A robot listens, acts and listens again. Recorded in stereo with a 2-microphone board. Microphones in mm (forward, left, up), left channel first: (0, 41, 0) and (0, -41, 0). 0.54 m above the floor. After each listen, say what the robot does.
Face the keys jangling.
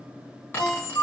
Turn 35° left.
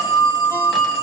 Keep listening.
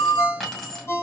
Found it: keys jangling, straight ahead.